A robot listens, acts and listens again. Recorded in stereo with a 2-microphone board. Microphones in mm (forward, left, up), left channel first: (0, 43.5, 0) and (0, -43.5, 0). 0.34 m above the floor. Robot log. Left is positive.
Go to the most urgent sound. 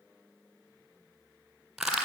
cmd idle
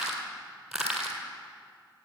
cmd idle
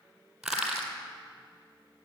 end: I can't make out anything urgent to turn to.